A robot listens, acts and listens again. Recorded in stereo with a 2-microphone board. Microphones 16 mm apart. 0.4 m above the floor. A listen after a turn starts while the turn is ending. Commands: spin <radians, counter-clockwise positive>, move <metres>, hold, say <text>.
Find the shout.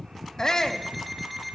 spin 0.70
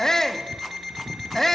say Found it: a shout, straight ahead.